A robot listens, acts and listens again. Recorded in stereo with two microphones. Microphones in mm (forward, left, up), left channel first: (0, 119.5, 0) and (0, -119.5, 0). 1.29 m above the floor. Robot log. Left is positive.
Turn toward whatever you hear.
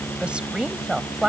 cmd yaw -30
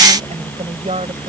note: So it is at 150° right.
cmd yaw -150
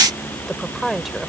end: Facing the woman speaking.